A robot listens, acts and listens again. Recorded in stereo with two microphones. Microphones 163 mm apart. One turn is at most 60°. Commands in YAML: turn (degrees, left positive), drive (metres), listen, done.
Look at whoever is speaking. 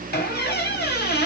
listen: true
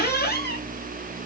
listen: true
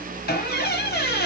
done: "I can't make out anyone speaking, only a squeak."